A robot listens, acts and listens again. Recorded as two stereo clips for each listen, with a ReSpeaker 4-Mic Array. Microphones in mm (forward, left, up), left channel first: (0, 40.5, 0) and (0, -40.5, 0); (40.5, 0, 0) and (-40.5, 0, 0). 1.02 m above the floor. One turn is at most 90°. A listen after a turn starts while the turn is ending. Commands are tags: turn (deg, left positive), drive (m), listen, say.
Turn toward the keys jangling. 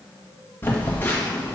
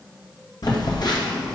<listen/>
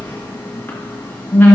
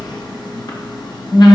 <listen/>
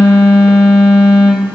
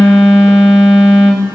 <say>I can't make out keys jangling, only a phone buzzing.</say>